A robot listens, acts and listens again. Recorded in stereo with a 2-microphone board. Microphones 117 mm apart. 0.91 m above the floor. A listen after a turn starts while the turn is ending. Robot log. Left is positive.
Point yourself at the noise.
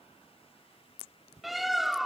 cmd yaw +30
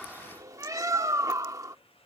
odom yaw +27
note: So it is at 30° right.
cmd yaw -30
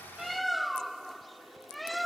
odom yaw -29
end: Found it: a bird, straight ahead.